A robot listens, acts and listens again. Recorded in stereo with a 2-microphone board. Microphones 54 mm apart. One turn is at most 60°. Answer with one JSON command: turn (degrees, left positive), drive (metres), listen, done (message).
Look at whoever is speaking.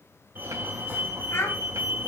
{"turn": 45}
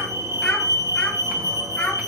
{"turn": 20}
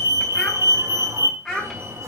{"done": "Facing the child speaking."}